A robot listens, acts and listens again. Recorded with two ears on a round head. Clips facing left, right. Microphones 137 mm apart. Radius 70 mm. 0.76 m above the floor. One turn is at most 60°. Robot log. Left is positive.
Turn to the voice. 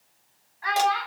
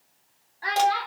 note: The child speaking: about 40° right or 140° right.
cmd yaw -40
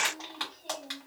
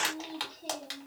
cmd idle
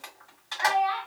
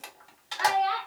note: So it is at 100° right.
cmd yaw -60
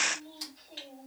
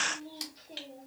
note: Nothing new. It was at 40° right.
cmd yaw -40
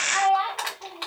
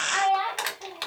note: The child speaking is now 10° right.
cmd yaw -10
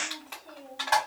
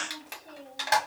cmd idle
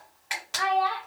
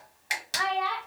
end: Facing the child speaking, 1 to 2 m away.